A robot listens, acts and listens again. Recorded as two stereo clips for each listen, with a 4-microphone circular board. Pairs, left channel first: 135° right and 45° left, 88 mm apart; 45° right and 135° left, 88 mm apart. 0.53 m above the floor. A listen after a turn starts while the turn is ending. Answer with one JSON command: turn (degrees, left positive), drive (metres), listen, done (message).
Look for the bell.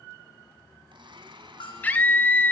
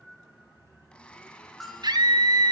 {"turn": -135}
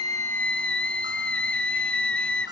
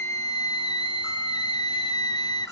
{"listen": true}
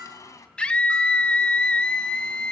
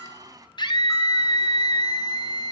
{"listen": true}
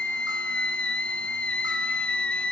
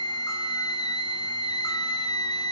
{"done": "Facing where the bell came from. I can't hear it now."}